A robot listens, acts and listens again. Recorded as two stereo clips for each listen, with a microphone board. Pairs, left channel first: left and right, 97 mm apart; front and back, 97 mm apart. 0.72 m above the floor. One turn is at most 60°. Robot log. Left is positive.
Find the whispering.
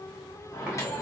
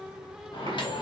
cmd idle
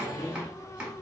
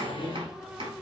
cmd idle
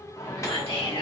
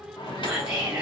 note: The whispering: 100° left.
cmd yaw +60
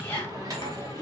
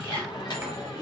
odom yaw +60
note: The whispering is now 30° left.
cmd yaw +30
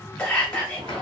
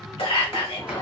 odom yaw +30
note: The whispering is now 10° left.
cmd yaw +10
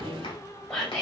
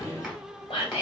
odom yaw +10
end: Facing the whispering.